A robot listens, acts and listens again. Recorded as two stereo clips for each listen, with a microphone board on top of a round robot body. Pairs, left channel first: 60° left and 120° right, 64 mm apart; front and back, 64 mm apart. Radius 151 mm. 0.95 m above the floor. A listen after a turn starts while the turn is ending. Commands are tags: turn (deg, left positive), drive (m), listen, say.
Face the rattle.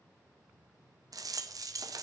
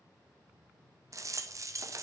<turn deg="-140"/>
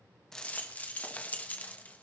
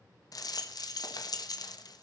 <say>Found it: a rattle, straight ahead, 1 to 2 m away.</say>